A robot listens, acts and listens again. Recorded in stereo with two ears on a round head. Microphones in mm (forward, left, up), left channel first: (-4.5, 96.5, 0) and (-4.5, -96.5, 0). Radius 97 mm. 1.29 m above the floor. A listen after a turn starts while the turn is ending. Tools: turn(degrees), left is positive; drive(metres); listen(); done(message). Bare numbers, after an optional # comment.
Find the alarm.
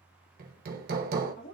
listen()
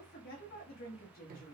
listen()
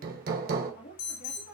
# The alarm: about 50° left or 130° left.
turn(50)
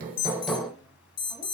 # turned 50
# So it is at 70° left.
turn(70)
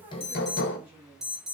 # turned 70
done("Found it: an alarm, straight ahead.")